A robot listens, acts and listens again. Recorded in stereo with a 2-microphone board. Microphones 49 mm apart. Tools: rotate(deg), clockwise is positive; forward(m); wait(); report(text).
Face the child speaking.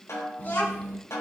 rotate(-45)
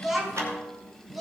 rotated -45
report("Facing the child speaking.")